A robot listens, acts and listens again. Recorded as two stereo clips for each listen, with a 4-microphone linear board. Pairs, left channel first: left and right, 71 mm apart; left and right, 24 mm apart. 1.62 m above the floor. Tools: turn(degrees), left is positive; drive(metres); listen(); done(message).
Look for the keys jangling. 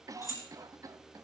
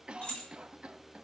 turn(degrees=45)
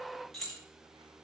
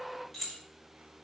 done("Found it: keys jangling, straight ahead.")